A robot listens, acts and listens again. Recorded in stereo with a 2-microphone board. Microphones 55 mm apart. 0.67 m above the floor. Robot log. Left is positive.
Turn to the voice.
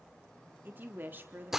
note: The woman speaking: about 40° right or 140° right.
cmd yaw -40
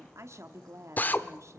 note: So it is at 95° right.
cmd yaw -95
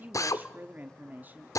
note: The woman speaking is now 35° right.
cmd yaw -35
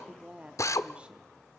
note: The woman speaking is now 20° right.
cmd yaw -20
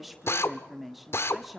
end: Found it: a woman speaking, straight ahead, 1 to 2 m away.